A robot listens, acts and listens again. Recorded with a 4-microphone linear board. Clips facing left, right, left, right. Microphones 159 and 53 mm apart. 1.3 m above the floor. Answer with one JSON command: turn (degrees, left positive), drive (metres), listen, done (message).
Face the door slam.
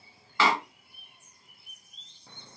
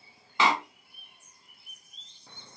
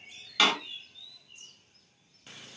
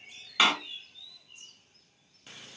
{"turn": -20}
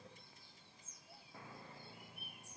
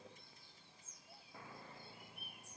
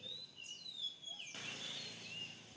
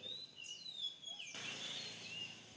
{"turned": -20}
{"listen": true}
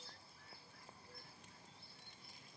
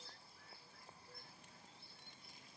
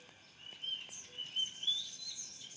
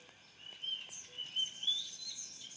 {"done": "I heard a door slam, but can't make it out now. It was about straight ahead or 140° right."}